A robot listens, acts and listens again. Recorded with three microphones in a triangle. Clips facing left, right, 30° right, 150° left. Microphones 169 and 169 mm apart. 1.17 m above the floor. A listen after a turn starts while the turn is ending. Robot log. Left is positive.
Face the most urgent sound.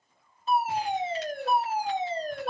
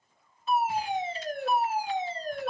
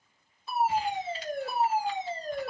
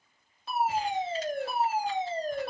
note: The fire alarm: 140° left.
cmd yaw +140
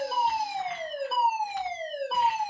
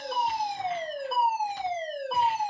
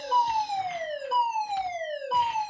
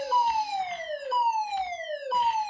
end: Found it: a fire alarm, straight ahead.